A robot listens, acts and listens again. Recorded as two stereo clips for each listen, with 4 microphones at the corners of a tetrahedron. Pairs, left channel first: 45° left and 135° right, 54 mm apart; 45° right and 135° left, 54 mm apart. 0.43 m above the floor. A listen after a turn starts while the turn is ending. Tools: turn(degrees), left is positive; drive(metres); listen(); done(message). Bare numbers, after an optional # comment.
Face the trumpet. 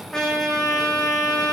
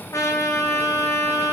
# The trumpet: 35° right.
turn(-35)
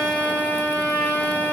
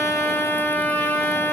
done("Facing the trumpet, over 4 m away.")